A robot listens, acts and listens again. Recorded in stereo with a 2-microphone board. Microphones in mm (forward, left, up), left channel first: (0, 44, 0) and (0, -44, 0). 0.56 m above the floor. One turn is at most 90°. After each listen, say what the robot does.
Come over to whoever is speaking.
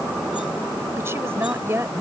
Turn 30° right.
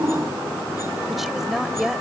Drive 1.0 m forward.
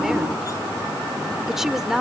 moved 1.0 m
Drive 1.0 m forward.
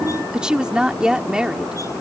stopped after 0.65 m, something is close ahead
Turn 15° right.
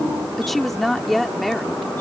Arrived at the woman speaking, straight ahead.